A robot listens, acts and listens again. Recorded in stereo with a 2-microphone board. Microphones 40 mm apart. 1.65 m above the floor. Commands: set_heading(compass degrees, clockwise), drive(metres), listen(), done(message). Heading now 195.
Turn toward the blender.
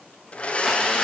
set_heading(165)
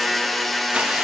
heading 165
done("Found it: a blender, straight ahead.")